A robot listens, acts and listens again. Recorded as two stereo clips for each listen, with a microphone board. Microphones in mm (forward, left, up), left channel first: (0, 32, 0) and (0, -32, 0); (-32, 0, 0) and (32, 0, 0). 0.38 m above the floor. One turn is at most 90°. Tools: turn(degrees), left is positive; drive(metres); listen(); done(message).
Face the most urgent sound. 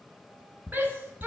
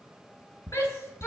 turn(degrees=-90)
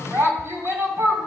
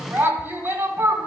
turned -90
turn(degrees=-55)
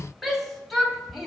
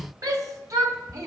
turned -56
done("Facing the shout, 2 to 4 m away.")